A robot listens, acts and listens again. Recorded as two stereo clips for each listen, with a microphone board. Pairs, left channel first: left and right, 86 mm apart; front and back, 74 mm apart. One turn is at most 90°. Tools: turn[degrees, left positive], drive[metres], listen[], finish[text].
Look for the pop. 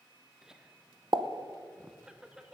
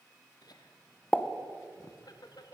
Thought: The pop: 65° right.
Action: turn[-65]
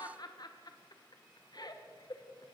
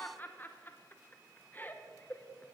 Action: finish[Facing where the pop came from. I can't hear it now.]